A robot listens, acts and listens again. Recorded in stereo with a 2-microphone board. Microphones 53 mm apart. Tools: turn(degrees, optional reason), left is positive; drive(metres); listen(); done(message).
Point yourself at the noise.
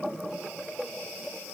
listen()
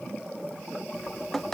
turn(degrees=30)
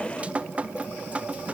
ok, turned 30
turn(degrees=-20, reason="So it is at 20° right.")
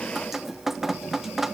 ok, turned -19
done("Facing the dripping, under 1 m away.")